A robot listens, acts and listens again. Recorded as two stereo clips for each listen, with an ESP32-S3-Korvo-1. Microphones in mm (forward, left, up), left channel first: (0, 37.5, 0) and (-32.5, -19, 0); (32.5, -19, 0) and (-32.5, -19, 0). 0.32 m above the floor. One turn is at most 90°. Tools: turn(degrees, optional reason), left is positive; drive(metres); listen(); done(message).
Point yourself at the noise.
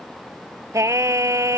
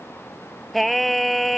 turn(degrees=-90, reason="The singing: 90° right.")
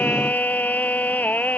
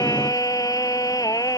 done("Facing the singing.")